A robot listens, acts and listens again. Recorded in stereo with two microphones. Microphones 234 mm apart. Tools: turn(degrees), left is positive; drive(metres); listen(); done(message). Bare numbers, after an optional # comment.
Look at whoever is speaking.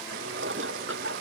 listen()
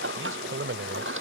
# The man speaking: about 60° right or 120° right.
turn(-60)
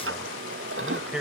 done("Facing the man speaking.")